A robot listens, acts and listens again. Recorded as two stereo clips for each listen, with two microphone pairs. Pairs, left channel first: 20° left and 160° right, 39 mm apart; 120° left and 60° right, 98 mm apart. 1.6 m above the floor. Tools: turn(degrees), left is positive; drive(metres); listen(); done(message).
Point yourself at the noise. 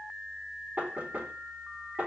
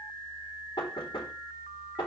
turn(degrees=155)
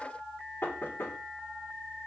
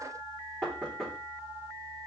turn(degrees=30)
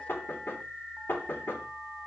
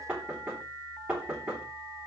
turn(degrees=15)
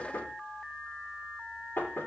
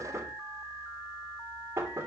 done("Found it: knocking, straight ahead.")